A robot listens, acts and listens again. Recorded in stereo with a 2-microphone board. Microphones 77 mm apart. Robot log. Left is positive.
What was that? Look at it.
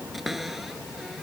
cmd yaw +30
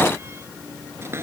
note: So it is at 35° right.
cmd yaw -35
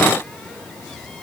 cmd idle
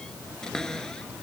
note: The cupboard door is now 10° left.
cmd yaw +10
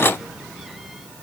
cmd idle
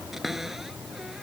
end: Facing the cupboard door.